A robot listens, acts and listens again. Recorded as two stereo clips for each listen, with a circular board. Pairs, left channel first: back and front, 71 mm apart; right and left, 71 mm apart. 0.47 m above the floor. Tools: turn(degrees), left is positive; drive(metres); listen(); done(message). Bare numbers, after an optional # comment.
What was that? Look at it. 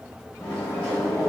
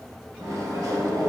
# The microwave: 110° left.
turn(110)
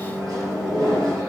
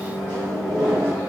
# The microwave is now 25° left.
turn(25)
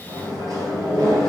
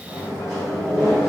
# The microwave is now 15° left.
turn(15)
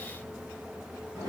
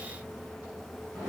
done("Facing the microwave.")